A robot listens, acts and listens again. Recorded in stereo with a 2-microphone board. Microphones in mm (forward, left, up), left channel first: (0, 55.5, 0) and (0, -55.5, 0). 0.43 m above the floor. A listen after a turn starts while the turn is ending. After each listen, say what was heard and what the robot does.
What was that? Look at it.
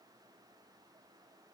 Keep listening.
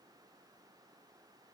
Keep listening.
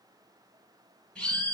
Turn 30° left.
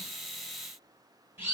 So it is at 20° right. Turn 20° right.
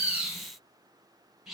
Facing the bird.